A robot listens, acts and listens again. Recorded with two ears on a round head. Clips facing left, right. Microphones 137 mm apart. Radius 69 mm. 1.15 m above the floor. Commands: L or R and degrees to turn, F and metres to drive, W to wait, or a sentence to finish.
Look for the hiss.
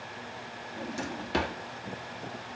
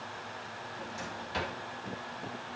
W
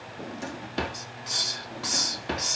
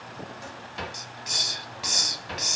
R15
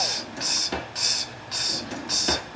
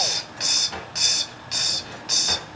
R150
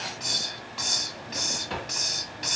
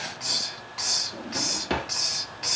Found it: a hiss, straight ahead.